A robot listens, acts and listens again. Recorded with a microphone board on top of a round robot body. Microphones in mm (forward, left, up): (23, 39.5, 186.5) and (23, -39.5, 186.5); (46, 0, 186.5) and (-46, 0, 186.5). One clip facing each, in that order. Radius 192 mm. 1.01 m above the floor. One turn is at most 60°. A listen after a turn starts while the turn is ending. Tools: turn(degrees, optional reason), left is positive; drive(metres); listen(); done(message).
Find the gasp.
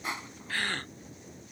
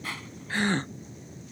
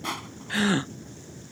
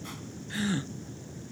turn(degrees=-20, reason="The gasp: 20° right.")
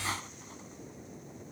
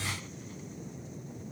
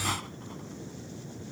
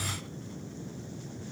done("I heard a gasp from this way, but can't make it out now.")